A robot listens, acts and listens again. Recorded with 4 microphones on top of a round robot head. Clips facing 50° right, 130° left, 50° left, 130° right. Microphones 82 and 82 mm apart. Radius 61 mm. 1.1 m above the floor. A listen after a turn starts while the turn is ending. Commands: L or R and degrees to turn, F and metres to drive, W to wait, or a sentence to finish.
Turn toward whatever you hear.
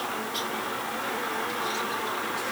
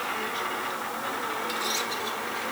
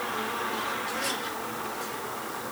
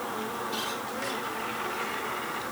W
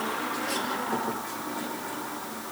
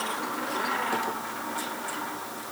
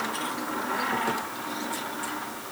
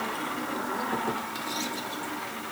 W
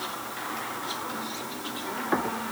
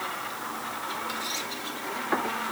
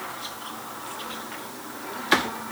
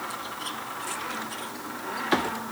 I can't make out anything to turn to.